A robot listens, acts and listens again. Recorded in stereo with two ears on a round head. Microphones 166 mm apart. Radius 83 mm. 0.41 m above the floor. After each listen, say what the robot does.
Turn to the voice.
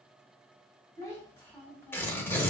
Turn 30° left.
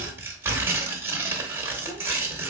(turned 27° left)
Keep listening.
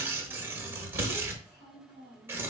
Turn 30° left.
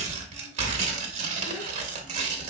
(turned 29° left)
Keep listening.
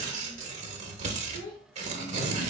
Turn 125° left.
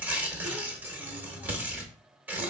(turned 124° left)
Keep listening.
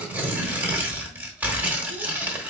Keep listening.
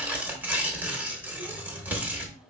Facing where the child speaking came from. I can't hear it now.